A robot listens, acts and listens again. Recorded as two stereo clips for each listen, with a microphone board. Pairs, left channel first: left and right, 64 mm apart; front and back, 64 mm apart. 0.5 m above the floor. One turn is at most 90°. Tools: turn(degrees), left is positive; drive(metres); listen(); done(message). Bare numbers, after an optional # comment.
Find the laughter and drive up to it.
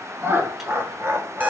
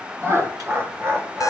# The laughter: 140° right.
turn(-90)
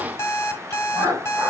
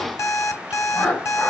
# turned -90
# The laughter is now 75° right.
turn(-75)
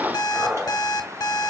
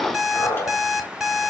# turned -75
# The laughter is now 20° right.
turn(-20)
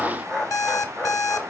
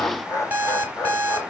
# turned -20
drive(1.0)
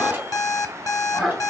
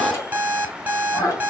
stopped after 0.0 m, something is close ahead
done("Something is in my way. I am facing the laughter but have not reached it.")